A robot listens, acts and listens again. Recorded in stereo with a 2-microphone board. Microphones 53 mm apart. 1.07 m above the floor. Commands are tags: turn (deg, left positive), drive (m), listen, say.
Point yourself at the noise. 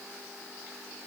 <listen/>
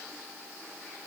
<listen/>
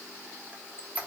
<turn deg="-25"/>
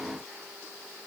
<listen/>
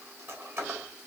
<turn deg="-125"/>
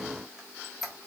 <say>Found it: a squeak, straight ahead.</say>